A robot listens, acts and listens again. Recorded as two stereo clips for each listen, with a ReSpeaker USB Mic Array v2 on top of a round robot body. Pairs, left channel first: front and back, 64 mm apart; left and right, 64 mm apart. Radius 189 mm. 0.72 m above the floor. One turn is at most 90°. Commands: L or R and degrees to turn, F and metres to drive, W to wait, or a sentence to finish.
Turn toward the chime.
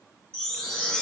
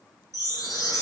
L75
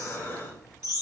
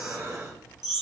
Found it: a chime, straight ahead, over 4 m away.